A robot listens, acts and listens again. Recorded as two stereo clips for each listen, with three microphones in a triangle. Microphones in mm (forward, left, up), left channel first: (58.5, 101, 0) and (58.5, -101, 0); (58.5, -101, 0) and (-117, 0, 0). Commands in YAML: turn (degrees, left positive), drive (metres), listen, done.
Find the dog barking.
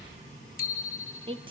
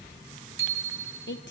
listen: true
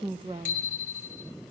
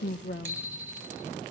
listen: true
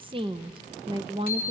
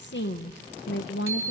done: "I can't make out a dog barking, only a woman speaking and a bicycle bell."